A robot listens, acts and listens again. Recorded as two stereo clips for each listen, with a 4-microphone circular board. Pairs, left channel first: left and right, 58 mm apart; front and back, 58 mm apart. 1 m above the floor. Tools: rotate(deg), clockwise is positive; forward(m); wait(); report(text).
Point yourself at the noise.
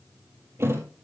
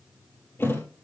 rotate(45)
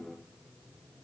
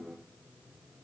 report("I heard a thud from this way, but can't make it out now.")